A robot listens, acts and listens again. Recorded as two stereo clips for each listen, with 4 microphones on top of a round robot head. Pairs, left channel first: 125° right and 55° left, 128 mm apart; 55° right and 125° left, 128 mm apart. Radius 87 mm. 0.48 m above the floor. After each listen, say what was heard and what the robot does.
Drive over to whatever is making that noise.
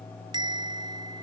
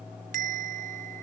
The bell: 115° left. Turn 115° left.
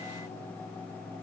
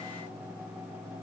The bell is now 10° right. Turn 10° right.
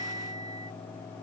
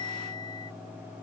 Drive 1.0 m forward.
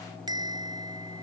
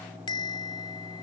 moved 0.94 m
Drive 1.0 m forward.
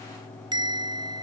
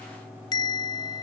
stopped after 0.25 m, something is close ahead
Blocked. The bell is further on, straight ahead.